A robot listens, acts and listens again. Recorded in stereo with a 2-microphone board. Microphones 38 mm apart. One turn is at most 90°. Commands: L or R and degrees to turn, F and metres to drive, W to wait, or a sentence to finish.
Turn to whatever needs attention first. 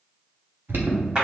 R60
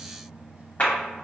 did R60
W
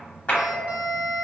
R35
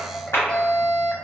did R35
L20
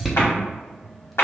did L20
Facing the alarm, under 1 m away.